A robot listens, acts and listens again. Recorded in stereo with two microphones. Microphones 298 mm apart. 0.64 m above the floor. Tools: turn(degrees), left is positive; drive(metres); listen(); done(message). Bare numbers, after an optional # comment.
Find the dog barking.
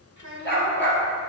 # The dog barking: about 40° left or 140° left.
turn(40)
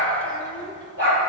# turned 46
# So it is at 95° left.
turn(95)
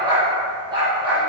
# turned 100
# The dog barking is now 15° right.
turn(-15)
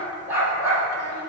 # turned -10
done("Facing the dog barking, over 4 m away.")